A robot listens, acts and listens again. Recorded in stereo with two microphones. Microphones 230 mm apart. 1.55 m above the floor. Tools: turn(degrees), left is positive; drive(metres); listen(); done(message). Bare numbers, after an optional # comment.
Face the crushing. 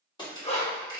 # The crushing: about 20° left or 160° left.
turn(20)
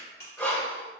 # So it is at 140° left.
turn(140)
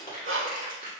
# The crushing is now 35° left.
turn(35)
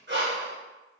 listen()
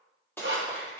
# The crushing is now 10° left.
turn(10)
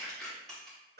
done("Found it: crushing, straight ahead.")